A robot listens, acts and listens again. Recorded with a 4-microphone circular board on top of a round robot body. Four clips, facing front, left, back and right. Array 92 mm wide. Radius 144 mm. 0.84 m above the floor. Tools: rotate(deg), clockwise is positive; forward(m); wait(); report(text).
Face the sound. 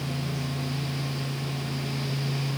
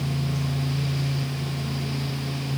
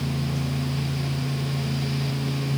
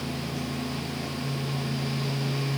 wait()
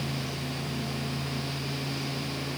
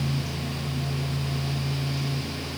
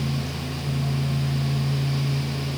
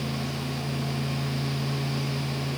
wait()
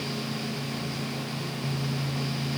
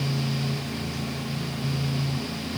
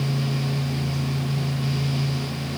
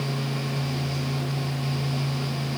report("I can't make out anything to turn to.")